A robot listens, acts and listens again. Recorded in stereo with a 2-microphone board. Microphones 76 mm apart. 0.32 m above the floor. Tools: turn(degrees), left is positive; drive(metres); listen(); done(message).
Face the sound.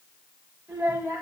turn(degrees=-25)
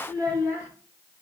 turn(degrees=-135)
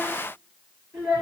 turn(degrees=-20)
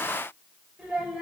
turn(degrees=-10)
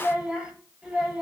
done("Found it: a child speaking, straight ahead, over 4 m away.")